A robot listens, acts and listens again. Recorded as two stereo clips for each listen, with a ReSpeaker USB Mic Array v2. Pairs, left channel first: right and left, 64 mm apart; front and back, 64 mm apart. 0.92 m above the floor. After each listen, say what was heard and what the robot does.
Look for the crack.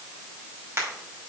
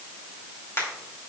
The crack: 45° left. Turn 45° left.
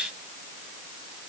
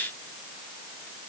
I heard a crack from this way, but can't make it out now.